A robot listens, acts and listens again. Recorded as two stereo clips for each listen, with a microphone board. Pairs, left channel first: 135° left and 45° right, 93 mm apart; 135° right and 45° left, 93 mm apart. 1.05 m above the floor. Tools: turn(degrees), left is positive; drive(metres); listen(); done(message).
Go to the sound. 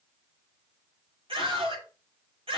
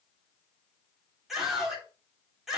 turn(degrees=-40)
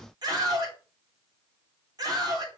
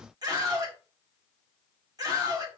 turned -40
drive(metres=1.0)
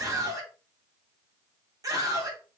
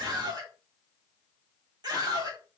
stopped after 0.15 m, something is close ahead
done("Something is in my way. I am facing the scream but have not reached it.")